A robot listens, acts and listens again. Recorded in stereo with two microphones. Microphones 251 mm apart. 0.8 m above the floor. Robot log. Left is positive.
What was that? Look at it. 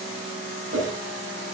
note: The whoosh: about 55° right or 125° right.
cmd yaw -55
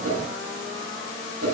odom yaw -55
note: So it is at 70° right.
cmd yaw -70
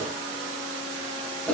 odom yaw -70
end: Facing the whoosh.